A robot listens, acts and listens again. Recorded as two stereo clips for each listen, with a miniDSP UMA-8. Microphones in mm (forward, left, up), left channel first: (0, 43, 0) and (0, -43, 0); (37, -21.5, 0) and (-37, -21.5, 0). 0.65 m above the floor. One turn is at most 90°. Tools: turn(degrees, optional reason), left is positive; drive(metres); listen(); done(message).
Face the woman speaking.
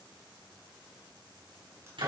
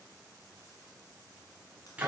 listen()
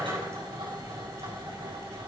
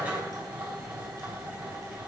listen()
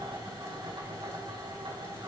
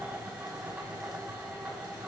done("I can't make out a woman speaking, only a drill.")